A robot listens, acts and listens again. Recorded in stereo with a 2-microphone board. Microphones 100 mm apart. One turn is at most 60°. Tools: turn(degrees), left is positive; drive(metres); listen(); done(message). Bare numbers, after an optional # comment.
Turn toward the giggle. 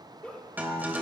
turn(30)
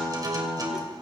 listen()
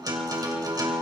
listen()
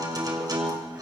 done("I heard a giggle, but can't make it out now. It was about 20° right or 140° left.")